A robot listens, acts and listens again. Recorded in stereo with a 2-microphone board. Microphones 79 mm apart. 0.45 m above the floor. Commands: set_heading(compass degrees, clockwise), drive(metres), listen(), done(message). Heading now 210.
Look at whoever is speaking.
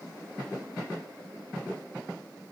listen()
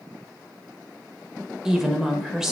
set_heading(240)
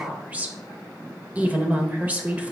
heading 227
set_heading(27)
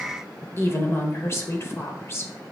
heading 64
set_heading(24)
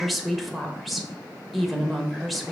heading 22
done("Found it: a woman speaking, straight ahead, 1 to 2 m away.")